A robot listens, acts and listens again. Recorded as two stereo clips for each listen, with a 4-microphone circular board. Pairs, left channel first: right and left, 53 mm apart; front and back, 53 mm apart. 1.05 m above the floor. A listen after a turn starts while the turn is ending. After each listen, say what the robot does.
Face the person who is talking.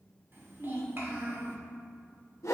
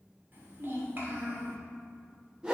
Turn 135° left.
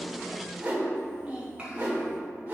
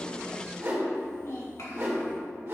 Turn 20° left.
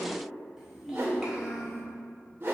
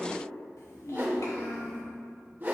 Turn 10° left.
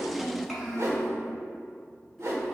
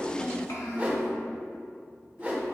Found it: a child speaking, straight ahead.